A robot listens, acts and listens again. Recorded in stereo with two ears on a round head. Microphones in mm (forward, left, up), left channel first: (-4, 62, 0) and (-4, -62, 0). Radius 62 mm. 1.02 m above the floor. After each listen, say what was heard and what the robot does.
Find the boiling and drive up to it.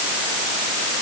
Keep listening.
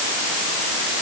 Keep listening.
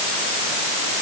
I can't make out boiling to turn to.